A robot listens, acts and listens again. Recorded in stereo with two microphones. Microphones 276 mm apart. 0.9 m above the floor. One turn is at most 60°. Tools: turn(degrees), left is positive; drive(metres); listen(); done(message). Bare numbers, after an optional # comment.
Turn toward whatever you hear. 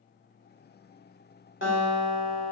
# The guitar: about 45° left or 135° left.
turn(45)
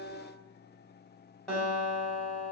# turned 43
done("Facing the guitar, 1 to 2 m away.")